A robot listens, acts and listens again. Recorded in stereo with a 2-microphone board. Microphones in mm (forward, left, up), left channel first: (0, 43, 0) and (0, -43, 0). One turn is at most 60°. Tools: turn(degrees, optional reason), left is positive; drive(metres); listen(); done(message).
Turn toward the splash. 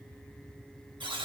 listen()
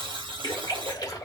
turn(degrees=50, reason="The splash: about 50° left or 130° left.")
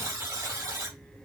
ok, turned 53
listen()
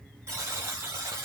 done("I heard a splash, but can't make it out now. It was about 5° right or 75° left.")